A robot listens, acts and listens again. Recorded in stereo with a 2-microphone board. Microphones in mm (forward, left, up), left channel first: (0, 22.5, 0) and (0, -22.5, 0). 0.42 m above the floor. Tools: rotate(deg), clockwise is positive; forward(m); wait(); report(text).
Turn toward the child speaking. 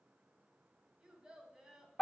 rotate(30)
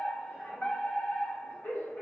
wait()
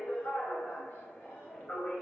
wait()
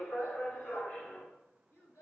rotate(-55)
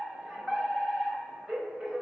wait()
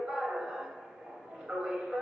wait()
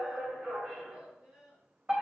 rotate(15)
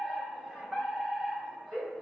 wait()
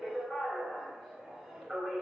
wait()
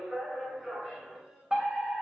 report("Found it: a child speaking, straight ahead.")